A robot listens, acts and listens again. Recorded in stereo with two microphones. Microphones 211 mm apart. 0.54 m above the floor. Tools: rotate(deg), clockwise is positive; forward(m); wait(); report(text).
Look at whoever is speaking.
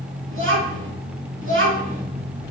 rotate(75)
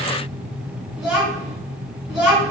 report("Found it: a child speaking, straight ahead.")